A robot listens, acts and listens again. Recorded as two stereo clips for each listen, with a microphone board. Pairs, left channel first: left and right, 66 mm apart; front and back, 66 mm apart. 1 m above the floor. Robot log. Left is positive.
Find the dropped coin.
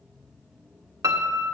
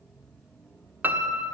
cmd idle
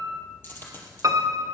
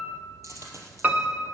note: The dropped coin: 145° left.
cmd yaw +145
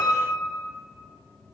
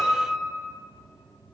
end: I heard a dropped coin from this way, but can't make it out now.